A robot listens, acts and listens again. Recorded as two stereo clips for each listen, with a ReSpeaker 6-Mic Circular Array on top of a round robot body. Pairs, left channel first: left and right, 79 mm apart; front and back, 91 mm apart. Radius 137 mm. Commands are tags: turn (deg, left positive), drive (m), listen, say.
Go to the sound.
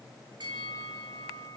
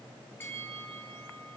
<turn deg="-65"/>
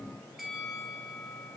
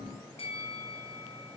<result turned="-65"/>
<drive m="1.0"/>
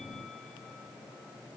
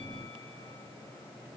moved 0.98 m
<listen/>
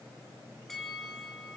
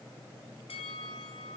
<drive m="1.0"/>
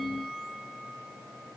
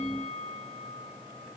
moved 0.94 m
<drive m="1.0"/>
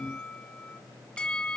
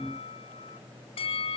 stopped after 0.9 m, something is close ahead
<turn deg="10"/>
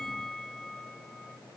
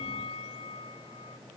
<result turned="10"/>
<say>Arrived at the bell, straight ahead.</say>